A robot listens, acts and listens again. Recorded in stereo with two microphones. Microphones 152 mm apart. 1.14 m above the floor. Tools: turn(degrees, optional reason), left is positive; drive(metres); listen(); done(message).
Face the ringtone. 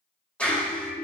turn(degrees=70, reason="The ringtone: about 70° left or 110° left.")
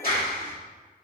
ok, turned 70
listen()
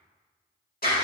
listen()
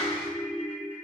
turn(degrees=40, reason="So it is at 40° left.")
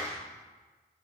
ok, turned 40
listen()
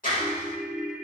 done("Facing the ringtone, 1 to 2 m away.")